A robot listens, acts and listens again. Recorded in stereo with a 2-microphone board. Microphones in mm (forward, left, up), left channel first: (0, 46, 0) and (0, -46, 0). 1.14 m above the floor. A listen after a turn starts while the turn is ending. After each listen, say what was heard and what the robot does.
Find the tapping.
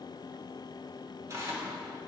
Keep listening.
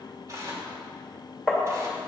Turn 30° left.
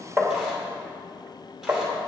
So it is at 30° right. Turn 30° right.
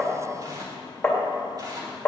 The tapping is now 10° left. Turn 10° left.
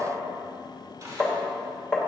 Found it: tapping, straight ahead.